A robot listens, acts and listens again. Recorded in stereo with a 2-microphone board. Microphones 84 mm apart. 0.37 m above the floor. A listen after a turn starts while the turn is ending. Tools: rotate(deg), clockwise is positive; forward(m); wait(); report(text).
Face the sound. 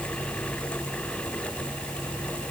wait()
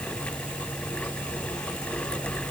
wait()
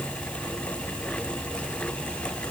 report("I can't make out anything to turn to.")